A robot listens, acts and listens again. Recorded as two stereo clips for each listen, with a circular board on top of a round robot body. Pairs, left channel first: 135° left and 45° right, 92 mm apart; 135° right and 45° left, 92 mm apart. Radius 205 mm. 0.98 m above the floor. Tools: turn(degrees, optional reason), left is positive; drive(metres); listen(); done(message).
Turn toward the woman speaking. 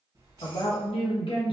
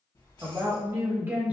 turn(degrees=120, reason="The woman speaking: 120° left.")
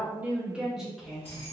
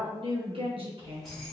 turn(degrees=50, reason="The woman speaking is now 50° left.")
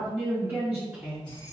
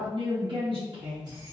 turn(degrees=30, reason="The woman speaking is now 30° left.")
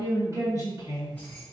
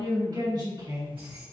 done("Facing the woman speaking.")